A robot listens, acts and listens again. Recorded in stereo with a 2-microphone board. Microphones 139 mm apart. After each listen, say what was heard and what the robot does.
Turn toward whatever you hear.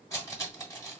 The cutlery clinking: about 25° left or 155° left. Turn 25° left.
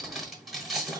Facing the cutlery clinking.